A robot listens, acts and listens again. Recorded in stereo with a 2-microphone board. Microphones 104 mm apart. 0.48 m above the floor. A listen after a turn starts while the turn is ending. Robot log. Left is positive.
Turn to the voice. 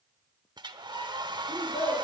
note: The child speaking: about 65° left or 115° left.
cmd yaw +65
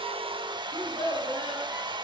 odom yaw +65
note: So it is at 45° left.
cmd yaw +45
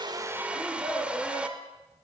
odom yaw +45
end: Facing the child speaking.